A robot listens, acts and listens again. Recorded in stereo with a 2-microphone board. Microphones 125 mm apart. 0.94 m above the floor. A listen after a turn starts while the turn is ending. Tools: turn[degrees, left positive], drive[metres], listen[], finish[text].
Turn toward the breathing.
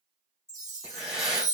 Action: turn[-30]
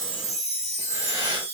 Thought: So it is at 25° left.
Action: turn[25]
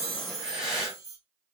Action: finish[Facing the breathing, 1 to 2 m away.]